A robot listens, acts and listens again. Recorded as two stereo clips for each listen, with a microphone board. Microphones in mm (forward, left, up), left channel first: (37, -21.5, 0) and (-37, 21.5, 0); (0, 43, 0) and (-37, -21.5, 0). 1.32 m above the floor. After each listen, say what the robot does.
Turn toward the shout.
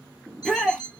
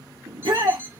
Turn 115° right.
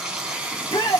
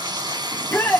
Found it: a shout, straight ahead, under 1 m away.